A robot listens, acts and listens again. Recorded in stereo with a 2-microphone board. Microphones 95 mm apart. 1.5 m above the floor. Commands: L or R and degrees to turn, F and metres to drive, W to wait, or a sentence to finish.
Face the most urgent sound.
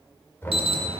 R90
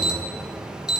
Found it: an alarm, straight ahead, 1 to 2 m away.